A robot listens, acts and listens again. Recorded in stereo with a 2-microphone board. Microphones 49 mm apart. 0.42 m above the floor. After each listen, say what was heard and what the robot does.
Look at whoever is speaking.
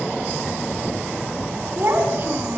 The child speaking: about 50° right or 130° right. Turn 50° right.
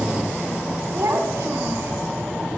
So it is at 80° right. Turn 80° right.
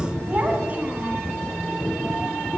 The child speaking is now 35° right. Turn 35° right.
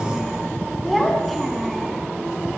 Facing the child speaking, 2 to 4 m away.